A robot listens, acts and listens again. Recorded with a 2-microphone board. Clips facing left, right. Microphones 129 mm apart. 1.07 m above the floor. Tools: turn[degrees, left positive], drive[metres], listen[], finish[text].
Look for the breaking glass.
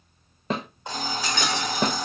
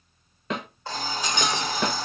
Thought: The breaking glass: about 20° right or 160° right.
Action: turn[-20]
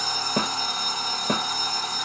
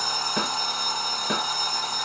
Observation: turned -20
Action: listen[]
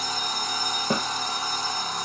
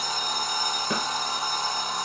Action: finish[I heard breaking glass, but can't make it out now. It was about straight ahead or 140° right.]